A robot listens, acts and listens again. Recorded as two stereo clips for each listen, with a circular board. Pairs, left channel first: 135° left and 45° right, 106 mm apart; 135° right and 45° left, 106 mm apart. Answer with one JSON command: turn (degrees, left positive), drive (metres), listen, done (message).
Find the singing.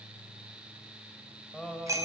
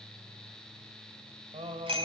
{"turn": 50}
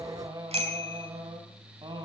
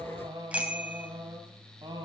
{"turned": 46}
{"done": "Facing the singing, 2 to 4 m away."}